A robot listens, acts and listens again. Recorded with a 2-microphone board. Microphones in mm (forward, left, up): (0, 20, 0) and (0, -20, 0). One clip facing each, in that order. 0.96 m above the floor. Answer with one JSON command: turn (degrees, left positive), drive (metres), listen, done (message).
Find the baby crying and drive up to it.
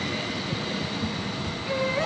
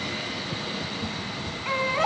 {"turn": -55}
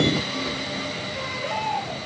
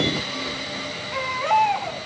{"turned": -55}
{"turn": -70}
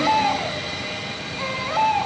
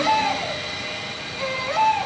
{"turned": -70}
{"turn": 10}
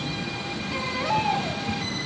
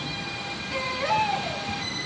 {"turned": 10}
{"drive": 1.0}
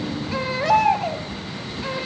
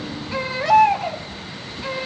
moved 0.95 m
{"drive": 1.0}
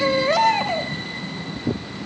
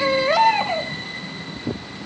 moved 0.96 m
{"turn": -10}
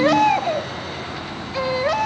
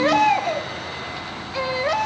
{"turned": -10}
{"drive": 1.0}
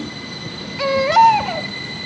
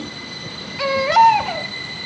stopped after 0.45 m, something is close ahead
{"done": "I am next to the baby crying."}